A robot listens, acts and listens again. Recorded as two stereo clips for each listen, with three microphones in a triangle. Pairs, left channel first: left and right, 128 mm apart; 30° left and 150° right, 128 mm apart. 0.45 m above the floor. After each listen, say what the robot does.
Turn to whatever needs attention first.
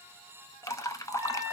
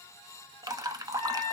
Keep listening.
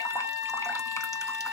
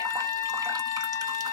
Keep listening.
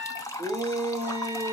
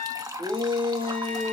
Turn 105° right.
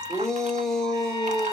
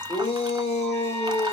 Found it: a shout, straight ahead, 1 to 2 m away.